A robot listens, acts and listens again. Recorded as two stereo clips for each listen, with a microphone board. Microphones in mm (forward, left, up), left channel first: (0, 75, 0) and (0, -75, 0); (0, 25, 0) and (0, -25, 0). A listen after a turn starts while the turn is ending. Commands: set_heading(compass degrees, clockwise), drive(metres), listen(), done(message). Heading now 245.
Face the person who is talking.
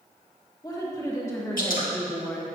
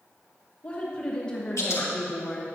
set_heading(215)
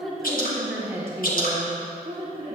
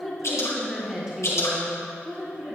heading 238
set_heading(283)
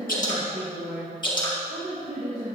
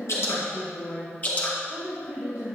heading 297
set_heading(342)
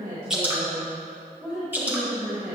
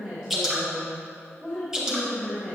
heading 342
done("Found it: a woman speaking, straight ahead.")